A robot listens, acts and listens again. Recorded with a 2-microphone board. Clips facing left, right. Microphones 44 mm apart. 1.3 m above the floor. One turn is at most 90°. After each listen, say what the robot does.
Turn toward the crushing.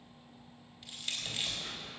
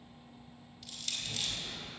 Turn 25° left.
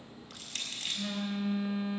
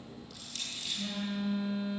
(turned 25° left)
Turn 90° left.
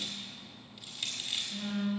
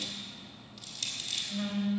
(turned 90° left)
Turn 15° left.
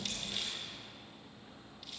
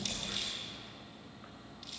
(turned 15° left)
Keep listening.
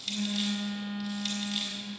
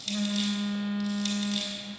Facing the crushing.